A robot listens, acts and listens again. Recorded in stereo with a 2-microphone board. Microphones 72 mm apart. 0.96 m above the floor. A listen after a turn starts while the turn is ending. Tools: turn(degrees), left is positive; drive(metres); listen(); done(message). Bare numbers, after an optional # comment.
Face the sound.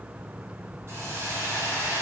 # The hiss: about 40° right or 140° right.
turn(-40)
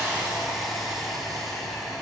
done("Found it: a hiss, straight ahead, 2 to 4 m away.")